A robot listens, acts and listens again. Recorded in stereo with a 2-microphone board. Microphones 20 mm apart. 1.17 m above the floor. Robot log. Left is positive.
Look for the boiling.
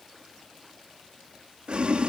note: The boiling: about 65° right or 115° right.
cmd yaw -65
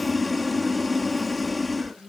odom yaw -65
end: Facing the boiling.